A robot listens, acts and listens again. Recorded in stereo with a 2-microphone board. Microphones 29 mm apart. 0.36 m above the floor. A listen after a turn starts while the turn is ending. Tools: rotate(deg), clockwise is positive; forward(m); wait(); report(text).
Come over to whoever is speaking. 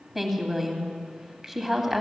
rotate(30)
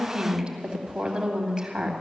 rotate(145)
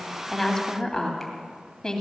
rotate(-30)
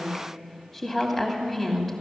rotate(-10)
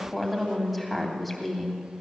forward(1.0)
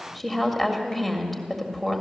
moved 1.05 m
rotate(-10)
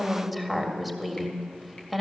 forward(1.0)
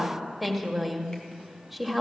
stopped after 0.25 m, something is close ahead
report("Arrived at the woman speaking, straight ahead.")